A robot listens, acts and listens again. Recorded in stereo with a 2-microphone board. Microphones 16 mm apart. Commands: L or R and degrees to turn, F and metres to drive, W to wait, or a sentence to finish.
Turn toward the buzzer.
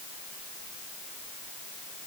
W
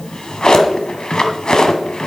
W
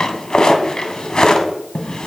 I can't make out a buzzer, only a drawer.